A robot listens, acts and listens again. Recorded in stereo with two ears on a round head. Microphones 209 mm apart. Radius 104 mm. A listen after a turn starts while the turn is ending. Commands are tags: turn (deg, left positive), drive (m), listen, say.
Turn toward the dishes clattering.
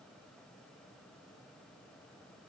<listen/>
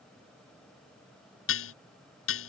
<turn deg="60"/>
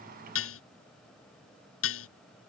<turn deg="65"/>
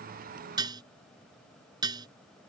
<turn deg="-20"/>
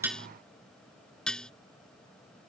<say>Facing the dishes clattering.</say>